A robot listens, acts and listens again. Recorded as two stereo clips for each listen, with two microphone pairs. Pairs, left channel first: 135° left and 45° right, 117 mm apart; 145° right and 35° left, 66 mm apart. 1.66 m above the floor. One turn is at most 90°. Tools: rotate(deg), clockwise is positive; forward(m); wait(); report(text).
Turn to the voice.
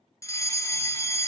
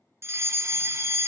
wait()
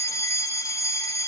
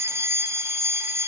wait()
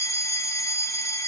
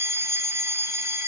report("I can't make out anyone speaking to turn to.")